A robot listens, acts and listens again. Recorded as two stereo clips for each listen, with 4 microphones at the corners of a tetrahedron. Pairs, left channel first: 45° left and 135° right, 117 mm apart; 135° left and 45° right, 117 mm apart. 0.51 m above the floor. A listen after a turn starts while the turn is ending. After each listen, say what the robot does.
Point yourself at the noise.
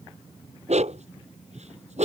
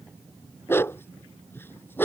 Turn 150° right.
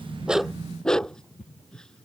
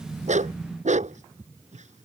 Turn 40° right.
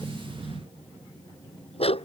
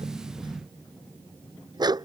Turn 10° left.
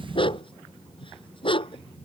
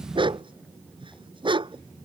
Facing the dog barking.